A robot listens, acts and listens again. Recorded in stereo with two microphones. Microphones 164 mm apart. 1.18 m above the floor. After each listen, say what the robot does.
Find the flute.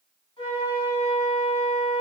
Turn 30° left.
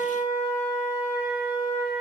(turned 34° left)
Turn 115° left.
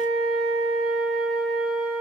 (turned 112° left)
Facing the flute, 1 to 2 m away.